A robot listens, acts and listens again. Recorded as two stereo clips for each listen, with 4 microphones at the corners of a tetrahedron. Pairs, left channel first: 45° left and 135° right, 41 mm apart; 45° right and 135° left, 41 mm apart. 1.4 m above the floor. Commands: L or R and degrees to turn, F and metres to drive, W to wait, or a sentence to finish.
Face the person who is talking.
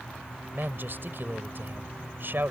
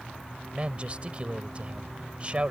R165
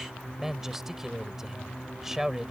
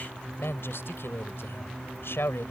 R50
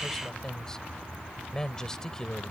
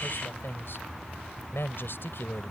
R25
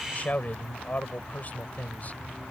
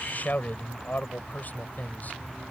Facing the man speaking.